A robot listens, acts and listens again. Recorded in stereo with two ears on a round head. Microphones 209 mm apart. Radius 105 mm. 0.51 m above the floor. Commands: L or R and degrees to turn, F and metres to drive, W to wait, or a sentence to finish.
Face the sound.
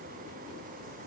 W
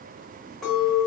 L30
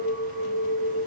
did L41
R40
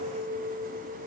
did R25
R15
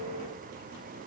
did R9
W
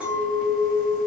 Found it: a clink, straight ahead, 1 to 2 m away.